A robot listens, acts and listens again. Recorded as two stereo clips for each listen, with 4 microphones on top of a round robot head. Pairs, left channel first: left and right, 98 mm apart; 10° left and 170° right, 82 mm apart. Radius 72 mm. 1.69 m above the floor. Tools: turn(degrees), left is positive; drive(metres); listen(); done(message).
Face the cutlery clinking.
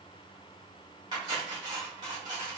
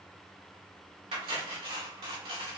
turn(degrees=-150)
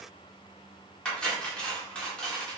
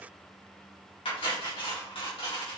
turn(degrees=10)
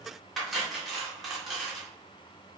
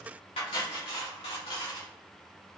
done("Facing the cutlery clinking, 1 to 2 m away.")